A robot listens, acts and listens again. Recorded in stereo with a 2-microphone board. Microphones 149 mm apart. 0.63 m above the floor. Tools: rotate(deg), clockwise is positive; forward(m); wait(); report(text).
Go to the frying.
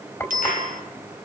rotate(-20)
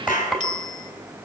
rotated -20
forward(1.0)
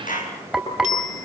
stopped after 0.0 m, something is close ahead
report("Something is in my way. I am facing the frying but have not reached it.")